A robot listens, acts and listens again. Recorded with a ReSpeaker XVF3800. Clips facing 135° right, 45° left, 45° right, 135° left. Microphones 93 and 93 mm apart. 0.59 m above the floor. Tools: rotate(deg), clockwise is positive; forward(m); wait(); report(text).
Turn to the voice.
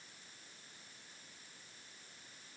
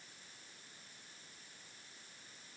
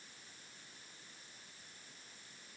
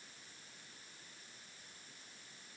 wait()
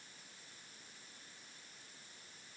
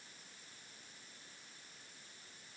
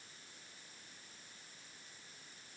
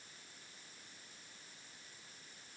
wait()
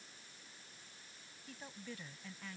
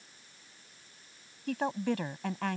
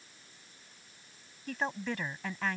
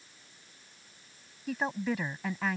rotate(-50)
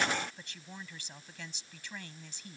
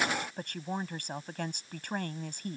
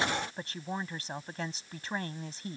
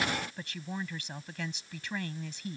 rotate(-10)
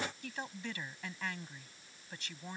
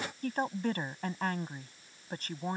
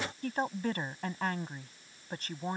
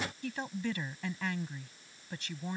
report("Found it: a woman speaking, straight ahead.")